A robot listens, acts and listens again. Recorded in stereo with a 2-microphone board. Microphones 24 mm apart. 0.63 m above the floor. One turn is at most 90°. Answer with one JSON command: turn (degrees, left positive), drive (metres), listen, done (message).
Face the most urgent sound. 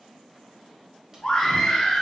{"turn": 25}
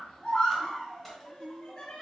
{"turn": 90}
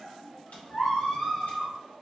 {"turn": 40}
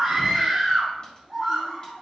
{"turn": -15}
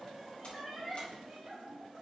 {"done": "Found it: a scream, straight ahead."}